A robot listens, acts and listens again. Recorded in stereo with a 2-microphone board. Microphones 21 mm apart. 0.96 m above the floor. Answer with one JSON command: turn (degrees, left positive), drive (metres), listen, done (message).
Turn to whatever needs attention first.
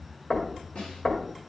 {"listen": true}
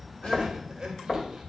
{"turn": -30}
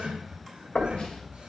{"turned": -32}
{"turn": -120}
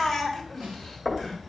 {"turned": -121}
{"done": "Facing the crying."}